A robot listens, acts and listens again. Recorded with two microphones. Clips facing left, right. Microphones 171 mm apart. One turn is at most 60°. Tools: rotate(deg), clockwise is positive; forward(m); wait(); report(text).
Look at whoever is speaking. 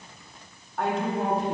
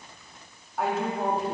rotate(30)
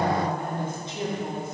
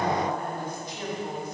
rotate(-25)
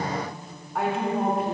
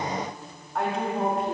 report("Found it: a woman speaking, straight ahead, 1 to 2 m away.")